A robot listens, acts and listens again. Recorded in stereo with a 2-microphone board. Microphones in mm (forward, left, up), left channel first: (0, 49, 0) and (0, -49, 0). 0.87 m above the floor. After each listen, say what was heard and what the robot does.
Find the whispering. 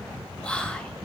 Turn 30° left.
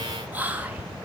So it is at 15° right. Turn 15° right.
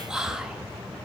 Facing the whispering, 1 to 2 m away.